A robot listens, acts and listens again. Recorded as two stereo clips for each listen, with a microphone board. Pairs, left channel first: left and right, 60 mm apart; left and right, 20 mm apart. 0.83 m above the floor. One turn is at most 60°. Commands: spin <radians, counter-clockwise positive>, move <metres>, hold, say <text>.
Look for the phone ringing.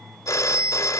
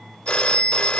spin 1.05
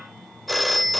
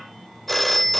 say Found it: a phone ringing, straight ahead.